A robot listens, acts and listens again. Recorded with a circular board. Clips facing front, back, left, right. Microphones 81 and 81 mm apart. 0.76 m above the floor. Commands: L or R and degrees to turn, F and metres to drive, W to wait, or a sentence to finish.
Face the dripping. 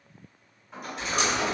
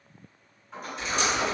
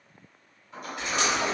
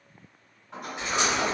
R25
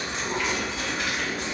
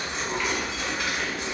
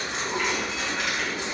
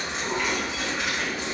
R10
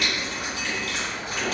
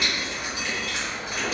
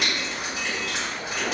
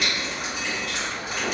Facing the dripping.